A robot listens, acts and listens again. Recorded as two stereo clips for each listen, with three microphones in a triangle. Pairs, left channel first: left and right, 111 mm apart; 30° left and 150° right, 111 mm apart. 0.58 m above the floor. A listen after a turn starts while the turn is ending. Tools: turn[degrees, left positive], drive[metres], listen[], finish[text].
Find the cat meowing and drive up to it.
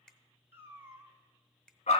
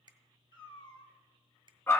Thought: The cat meowing: 20° right.
Action: turn[-20]
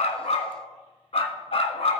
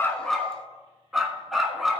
Action: listen[]
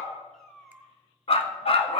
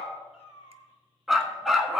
Action: drive[1.0]
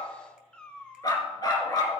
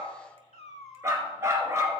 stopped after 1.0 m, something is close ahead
Thought: The cat meowing is now 10° left.
Action: turn[10]
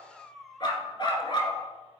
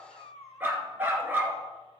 Action: finish[I am next to the cat meowing.]